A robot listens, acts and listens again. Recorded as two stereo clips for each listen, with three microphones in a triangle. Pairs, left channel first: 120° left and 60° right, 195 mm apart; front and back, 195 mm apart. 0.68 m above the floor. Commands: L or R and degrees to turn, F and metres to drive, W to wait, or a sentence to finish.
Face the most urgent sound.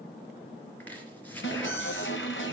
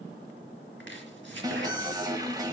L110
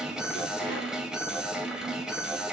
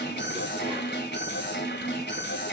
L25
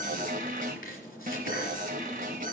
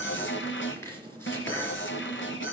R15
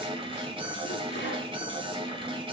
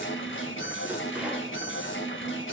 Facing the alarm, 2 to 4 m away.